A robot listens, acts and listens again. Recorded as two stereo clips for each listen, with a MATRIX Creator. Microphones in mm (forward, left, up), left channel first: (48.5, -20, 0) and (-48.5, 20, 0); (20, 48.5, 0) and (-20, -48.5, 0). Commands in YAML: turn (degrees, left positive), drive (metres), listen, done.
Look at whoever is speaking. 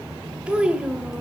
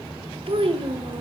turn: -125
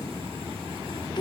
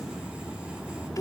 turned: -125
turn: 15
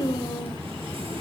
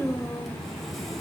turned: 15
done: "Found it: a child speaking, straight ahead, 1 to 2 m away."